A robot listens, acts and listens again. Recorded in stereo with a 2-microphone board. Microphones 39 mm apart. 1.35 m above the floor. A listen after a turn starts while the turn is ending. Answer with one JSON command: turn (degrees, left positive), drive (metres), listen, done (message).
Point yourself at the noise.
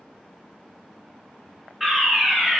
{"turn": -30}
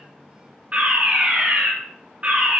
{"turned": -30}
{"turn": -145}
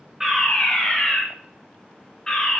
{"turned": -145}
{"turn": 15}
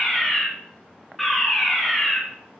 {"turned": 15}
{"done": "Facing the fire alarm."}